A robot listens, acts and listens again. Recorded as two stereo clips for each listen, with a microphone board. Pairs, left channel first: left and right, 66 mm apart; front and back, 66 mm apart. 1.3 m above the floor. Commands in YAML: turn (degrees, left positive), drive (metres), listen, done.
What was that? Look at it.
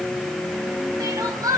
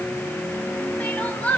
turn: -65
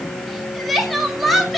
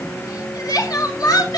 done: "Facing the crying, 2 to 4 m away."